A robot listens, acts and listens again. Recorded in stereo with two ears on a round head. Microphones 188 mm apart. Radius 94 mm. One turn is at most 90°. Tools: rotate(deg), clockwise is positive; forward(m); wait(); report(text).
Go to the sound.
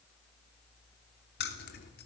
rotate(-50)
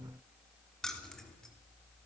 forward(1.0)
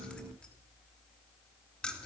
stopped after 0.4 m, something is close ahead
report("Blocked. The keys jangling is further on, straight ahead.")